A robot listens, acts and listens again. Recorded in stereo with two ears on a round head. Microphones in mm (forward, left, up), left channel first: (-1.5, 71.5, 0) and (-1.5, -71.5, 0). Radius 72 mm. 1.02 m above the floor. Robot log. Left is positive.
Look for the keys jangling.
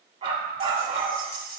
note: The keys jangling: about 65° left or 115° left.
cmd yaw +65
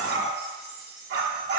note: So it is at 45° left.
cmd yaw +45
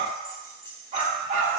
note: The keys jangling is now 20° left.
cmd yaw +20
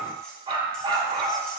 cmd idle
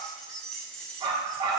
end: Facing the keys jangling, 2 to 4 m away.